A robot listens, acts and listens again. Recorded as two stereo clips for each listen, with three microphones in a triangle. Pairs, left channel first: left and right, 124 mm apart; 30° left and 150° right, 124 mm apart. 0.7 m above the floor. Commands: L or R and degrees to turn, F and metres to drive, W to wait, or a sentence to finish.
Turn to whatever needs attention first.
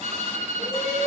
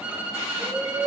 L125
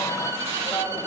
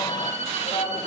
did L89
L35
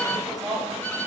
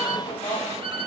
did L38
Found it: a shout, straight ahead.